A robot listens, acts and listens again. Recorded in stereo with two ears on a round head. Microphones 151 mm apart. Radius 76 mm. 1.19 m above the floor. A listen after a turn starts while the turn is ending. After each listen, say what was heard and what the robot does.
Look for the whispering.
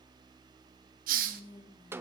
The whispering: about 30° left or 150° left. Turn 30° left.
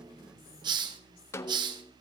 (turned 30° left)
Keep listening.
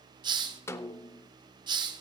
Keep listening.
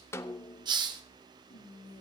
So it is at 120° left. Turn 120° left.
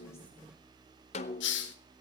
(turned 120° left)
Keep listening.
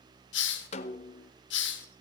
Keep listening.
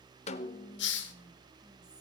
I heard whispering from this way, but can't make it out now.